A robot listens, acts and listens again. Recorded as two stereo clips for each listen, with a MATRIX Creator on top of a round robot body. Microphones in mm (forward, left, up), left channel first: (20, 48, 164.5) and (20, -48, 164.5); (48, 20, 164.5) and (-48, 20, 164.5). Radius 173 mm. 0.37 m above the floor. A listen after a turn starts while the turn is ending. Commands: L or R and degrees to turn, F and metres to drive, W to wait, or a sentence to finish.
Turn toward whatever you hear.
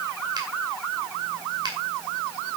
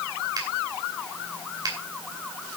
R135
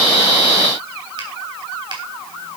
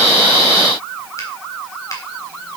W
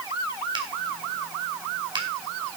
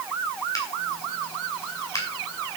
R55
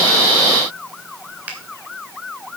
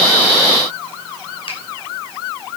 W
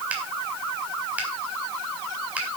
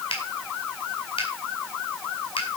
R15
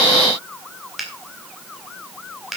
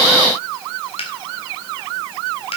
Facing the finger snap.